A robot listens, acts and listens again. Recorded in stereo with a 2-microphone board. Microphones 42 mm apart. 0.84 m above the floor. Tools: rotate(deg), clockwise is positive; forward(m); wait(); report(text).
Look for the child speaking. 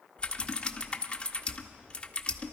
wait()
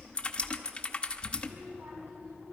rotate(55)
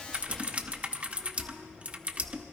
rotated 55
wait()
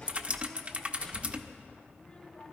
rotate(-20)
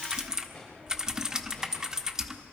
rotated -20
report("Found it: a child speaking, straight ahead.")